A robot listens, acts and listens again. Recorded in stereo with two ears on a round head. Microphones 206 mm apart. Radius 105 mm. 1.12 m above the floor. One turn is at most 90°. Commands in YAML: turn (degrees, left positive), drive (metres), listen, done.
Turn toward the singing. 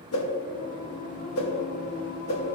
turn: 40
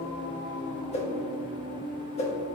turn: 90
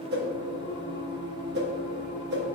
turn: 30
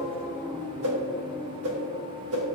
done: "Facing the singing, 1 to 2 m away."